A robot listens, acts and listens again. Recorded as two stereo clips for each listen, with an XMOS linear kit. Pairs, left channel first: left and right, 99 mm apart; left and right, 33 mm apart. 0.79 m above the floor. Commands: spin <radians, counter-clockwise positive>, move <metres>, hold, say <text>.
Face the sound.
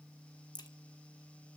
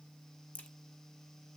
spin 0.79
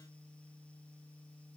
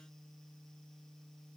hold
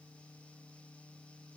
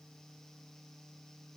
say I heard a crack, but can't make it out now. It was about straight ahead or 90° left.